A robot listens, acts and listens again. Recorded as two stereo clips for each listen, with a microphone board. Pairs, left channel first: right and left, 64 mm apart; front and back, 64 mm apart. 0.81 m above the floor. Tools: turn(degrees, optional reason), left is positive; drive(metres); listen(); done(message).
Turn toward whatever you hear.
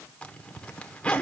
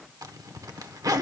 turn(degrees=-165, reason="The zipper: 165° right.")
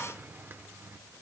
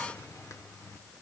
turn(degrees=35, reason="The zipper is now 35° left.")
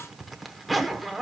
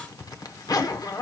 done("Found it: a zipper, straight ahead, 1 to 2 m away.")